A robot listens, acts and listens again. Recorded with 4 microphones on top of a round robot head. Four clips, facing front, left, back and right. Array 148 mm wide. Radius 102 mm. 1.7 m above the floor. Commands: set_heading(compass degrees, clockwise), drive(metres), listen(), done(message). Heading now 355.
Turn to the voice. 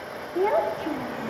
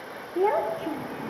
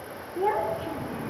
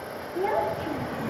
done("Facing the child speaking.")